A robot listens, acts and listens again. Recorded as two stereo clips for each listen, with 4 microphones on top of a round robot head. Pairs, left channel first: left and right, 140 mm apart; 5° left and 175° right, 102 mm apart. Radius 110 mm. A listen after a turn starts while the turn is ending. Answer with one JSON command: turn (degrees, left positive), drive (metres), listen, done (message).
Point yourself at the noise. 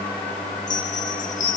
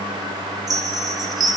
{"turn": 130}
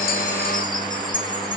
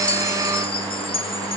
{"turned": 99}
{"turn": 30}
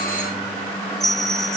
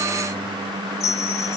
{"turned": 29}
{"done": "Facing the chime, 2 to 4 m away."}